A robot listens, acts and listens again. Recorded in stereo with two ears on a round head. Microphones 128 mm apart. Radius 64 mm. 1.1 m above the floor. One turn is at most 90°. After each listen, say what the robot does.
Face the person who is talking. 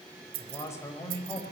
Turn 20° left.
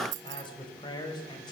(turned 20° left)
Turn 35° left.
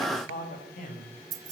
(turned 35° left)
Turn 90° left.
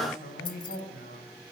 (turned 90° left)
Turn 65° left.
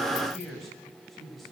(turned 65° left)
Facing the man speaking, over 4 m away.